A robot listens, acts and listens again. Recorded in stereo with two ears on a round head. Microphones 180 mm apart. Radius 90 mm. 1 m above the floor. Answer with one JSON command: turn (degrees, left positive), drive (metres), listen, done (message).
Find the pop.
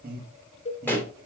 {"turn": 30}
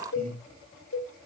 {"listen": true}
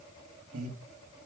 {"done": "I heard a pop, but can't make it out now. It was about 20° right or 140° left."}